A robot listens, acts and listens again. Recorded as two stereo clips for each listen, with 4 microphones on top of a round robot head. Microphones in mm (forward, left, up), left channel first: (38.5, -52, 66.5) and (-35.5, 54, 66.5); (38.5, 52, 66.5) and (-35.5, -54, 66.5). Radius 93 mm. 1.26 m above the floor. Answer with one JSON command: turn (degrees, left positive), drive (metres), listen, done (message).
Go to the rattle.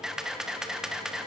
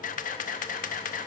{"listen": true}
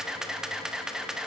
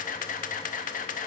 {"listen": true}
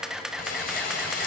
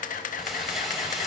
{"turn": -35}
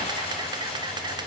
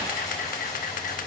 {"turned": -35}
{"turn": -10}
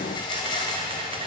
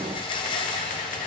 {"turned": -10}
{"drive": 1.0}
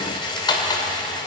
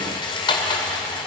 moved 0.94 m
{"drive": 1.0}
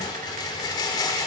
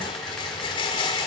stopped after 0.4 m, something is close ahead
{"done": "Arrived at the rattle, straight ahead."}